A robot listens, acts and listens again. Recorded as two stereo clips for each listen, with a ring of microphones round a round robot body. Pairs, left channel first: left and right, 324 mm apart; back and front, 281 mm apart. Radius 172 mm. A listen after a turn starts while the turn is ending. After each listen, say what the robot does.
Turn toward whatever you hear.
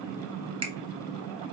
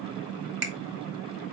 Turn 20° right.
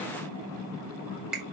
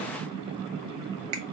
Facing the finger snap, 1 to 2 m away.